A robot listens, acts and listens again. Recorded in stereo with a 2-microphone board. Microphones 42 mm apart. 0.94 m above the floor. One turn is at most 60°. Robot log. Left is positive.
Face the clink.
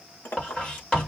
note: The clink: about 65° left or 115° left.
cmd yaw +60
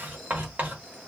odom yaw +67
cmd idle
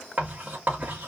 cmd idle
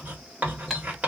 end: I heard a clink, but can't make it out now. It was about 5° right or 50° left.